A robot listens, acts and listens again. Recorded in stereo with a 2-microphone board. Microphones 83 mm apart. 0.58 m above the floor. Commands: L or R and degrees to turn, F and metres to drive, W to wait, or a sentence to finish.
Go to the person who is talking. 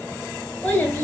L30
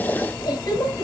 L135
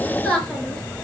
L20
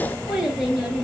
F1.0
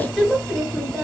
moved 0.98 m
F1.0
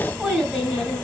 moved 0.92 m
F1.0
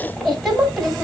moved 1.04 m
F1.0
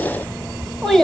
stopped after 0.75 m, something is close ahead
I am next to the child speaking.